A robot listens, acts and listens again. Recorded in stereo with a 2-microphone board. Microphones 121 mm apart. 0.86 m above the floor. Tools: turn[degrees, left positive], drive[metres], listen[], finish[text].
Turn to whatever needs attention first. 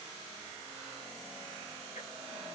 Action: listen[]
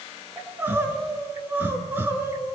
Thought: The crying: about 15° right or 165° right.
Action: turn[-15]
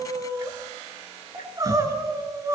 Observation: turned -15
Thought: So it is at 150° right.
Action: turn[-150]
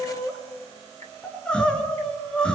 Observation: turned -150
Thought: The crying is now 10° left.
Action: turn[10]
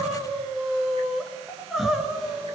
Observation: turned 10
Action: finish[Found it: crying, straight ahead, 2 to 4 m away.]